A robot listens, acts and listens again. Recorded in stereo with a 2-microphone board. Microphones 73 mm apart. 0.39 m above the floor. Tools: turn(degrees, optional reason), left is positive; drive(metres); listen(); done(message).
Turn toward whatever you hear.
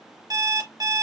turn(degrees=-65, reason="The alarm clock: about 65° right or 115° right.")
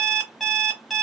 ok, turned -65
done("Facing the alarm clock.")